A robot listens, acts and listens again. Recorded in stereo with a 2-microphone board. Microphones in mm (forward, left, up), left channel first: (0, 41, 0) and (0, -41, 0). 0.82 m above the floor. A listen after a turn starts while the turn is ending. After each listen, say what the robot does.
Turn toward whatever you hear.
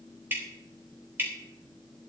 Turn 25° right.
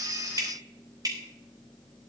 Turn 125° right.
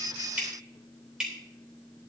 Turn 10° right.
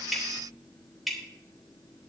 Found it: dripping, straight ahead, 2 to 4 m away.